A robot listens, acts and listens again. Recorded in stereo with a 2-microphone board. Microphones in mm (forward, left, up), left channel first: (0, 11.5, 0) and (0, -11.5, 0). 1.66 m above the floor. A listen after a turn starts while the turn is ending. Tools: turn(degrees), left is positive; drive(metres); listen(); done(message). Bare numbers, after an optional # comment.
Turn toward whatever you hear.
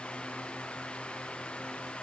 listen()
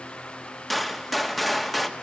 turn(30)
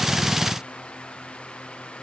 listen()
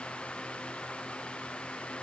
done("I heard a gunshot, but can't make it out now. It was about 30° right or 150° left.")